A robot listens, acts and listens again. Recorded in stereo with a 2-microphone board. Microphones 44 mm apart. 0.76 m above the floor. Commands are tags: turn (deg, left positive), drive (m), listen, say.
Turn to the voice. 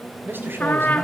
<turn deg="-55"/>
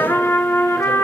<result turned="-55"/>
<listen/>
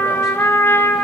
<listen/>
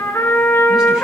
<say>I heard a man speaking, but can't make it out now. It was about straight ahead or 70° right.</say>